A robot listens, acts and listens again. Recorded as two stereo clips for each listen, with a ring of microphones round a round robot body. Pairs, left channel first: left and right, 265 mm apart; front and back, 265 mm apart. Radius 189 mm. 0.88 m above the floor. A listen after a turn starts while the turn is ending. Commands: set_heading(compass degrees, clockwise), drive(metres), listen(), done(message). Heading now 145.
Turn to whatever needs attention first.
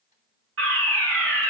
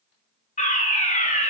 set_heading(205)
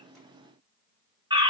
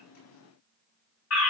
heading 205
set_heading(225)
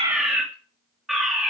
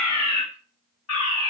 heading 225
done("Facing the fire alarm, 2 to 4 m away.")